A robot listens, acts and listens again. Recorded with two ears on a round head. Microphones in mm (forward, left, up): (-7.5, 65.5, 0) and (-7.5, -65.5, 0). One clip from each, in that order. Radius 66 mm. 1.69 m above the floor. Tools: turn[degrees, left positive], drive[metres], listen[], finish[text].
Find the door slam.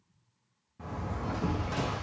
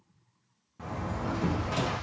Thought: The door slam: about 25° right or 155° right.
Action: turn[-25]
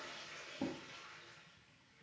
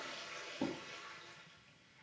Action: listen[]
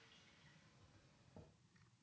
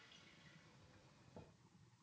Action: finish[I heard a door slam, but can't make it out now. It was about straight ahead or 130° right.]